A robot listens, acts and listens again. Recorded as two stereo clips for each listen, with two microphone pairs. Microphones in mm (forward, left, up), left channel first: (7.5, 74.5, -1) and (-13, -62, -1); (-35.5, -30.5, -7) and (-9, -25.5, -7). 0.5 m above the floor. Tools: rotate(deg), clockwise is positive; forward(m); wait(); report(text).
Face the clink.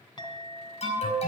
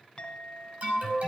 rotate(-135)
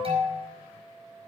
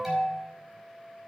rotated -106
rotate(-30)
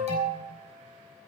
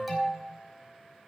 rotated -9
rotate(-20)
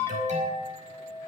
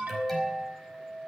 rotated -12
rotate(-10)
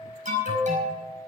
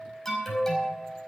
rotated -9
report("Found it: a clink, straight ahead.")